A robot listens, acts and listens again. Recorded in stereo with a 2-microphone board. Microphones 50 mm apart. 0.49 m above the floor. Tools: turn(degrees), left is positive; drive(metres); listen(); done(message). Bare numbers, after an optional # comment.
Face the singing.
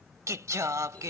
turn(-90)
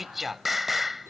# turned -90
done("Facing the singing.")